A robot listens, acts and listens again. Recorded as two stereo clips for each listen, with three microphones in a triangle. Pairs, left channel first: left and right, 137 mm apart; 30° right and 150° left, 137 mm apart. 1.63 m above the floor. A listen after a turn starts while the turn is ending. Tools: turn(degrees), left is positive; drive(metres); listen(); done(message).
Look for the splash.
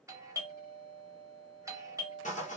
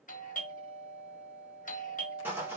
listen()
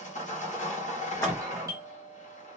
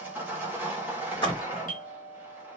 turn(degrees=20)
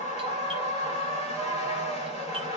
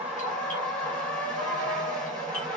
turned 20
done("Facing where the splash came from. I can't hear it now.")